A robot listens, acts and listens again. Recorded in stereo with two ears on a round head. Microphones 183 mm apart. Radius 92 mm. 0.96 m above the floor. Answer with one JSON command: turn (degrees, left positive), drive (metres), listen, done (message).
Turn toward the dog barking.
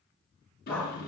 {"turn": 30}
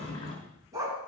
{"turn": -15}
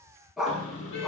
{"done": "Facing the dog barking, 2 to 4 m away."}